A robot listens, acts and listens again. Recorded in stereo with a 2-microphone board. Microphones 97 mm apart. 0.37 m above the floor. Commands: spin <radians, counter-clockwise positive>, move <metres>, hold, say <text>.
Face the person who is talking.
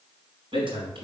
spin -1.22
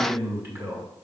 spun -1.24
spin -0.44
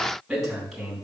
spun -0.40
say Found it: a man speaking, straight ahead, 2 to 4 m away.